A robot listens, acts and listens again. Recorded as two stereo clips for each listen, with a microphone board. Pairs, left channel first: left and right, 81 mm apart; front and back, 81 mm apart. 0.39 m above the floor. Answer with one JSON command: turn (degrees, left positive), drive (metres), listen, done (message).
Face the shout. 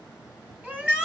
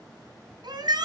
{"turn": -160}
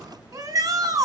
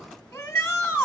{"turn": -45}
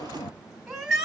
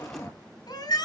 {"done": "Facing the shout, 2 to 4 m away."}